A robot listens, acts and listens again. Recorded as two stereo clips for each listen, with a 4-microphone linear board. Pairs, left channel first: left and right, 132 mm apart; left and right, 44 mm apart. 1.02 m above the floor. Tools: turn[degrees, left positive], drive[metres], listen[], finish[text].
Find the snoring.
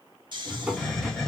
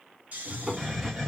Thought: The snoring: about 35° right or 145° right.
Action: turn[-35]
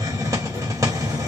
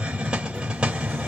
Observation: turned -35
Action: listen[]
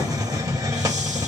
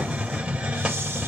Action: listen[]
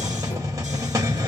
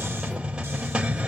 Action: finish[I heard snoring, but can't make it out now. It was about straight ahead or 110° right.]